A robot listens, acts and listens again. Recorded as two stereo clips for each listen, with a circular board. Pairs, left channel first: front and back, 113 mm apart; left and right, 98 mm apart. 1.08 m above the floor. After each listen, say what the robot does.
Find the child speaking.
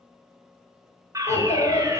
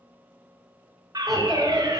Found it: a child speaking, straight ahead.